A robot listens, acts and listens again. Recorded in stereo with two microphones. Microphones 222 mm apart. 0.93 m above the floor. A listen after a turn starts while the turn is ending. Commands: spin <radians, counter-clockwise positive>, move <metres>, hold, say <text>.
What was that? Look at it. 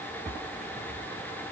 hold
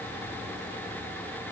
hold
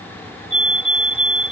spin 1.13
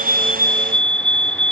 say Found it: a fire alarm, straight ahead.